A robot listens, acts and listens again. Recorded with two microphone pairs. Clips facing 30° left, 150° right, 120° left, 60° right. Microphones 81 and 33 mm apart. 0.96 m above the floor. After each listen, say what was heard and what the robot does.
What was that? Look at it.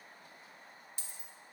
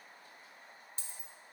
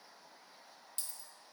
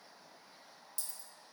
The dropped coin: 160° left. Turn 160° left.
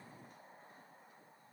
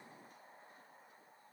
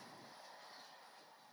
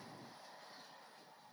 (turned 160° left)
I heard a dropped coin from this way, but can't make it out now.